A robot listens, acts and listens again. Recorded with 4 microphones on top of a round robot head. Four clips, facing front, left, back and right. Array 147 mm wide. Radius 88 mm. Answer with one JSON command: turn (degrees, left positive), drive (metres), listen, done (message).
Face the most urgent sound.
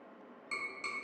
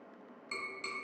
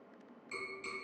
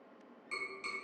{"listen": true}
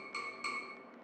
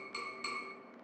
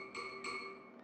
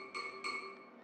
{"listen": true}
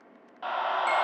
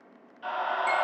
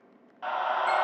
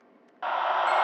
{"turn": -80}
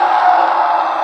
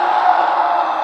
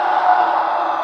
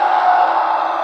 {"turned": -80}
{"done": "Found it: a scream, straight ahead, under 1 m away."}